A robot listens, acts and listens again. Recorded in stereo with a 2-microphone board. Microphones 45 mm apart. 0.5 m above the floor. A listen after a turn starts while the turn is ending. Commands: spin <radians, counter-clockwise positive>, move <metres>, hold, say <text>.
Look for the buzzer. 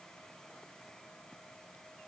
hold
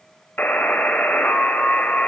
spin 0.79
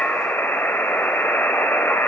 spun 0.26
spin 2.09
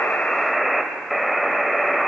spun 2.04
say Facing the buzzer.